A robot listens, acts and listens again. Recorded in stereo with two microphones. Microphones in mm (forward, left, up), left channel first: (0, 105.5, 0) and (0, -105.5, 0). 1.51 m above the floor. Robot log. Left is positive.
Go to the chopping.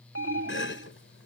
note: The chopping: about 70° left or 110° left.
cmd yaw +70
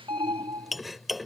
cmd fwd 1.0
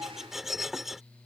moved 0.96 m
cmd fwd 1.0
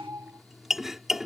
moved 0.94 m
cmd fwd 1.0
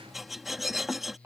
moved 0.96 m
cmd fwd 1.0
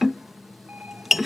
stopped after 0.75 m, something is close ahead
end: Arrived at the chopping, straight ahead.